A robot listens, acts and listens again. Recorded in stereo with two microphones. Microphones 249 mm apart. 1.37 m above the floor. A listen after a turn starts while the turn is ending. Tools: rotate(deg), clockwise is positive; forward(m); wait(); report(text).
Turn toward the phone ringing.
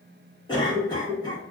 wait()
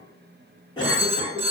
rotate(25)
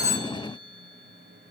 wait()
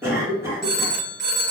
rotate(125)
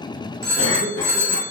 rotate(45)
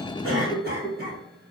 wait()
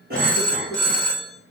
report("Found it: a phone ringing, straight ahead, under 1 m away.")